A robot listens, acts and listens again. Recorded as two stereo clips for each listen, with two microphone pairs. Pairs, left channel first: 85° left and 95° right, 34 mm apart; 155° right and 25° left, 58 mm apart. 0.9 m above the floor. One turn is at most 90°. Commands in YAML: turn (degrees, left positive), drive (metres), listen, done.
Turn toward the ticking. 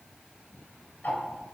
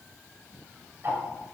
turn: 70
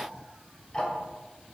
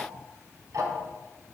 turn: 20
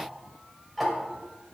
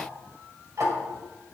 done: "Found it: ticking, straight ahead, 1 to 2 m away."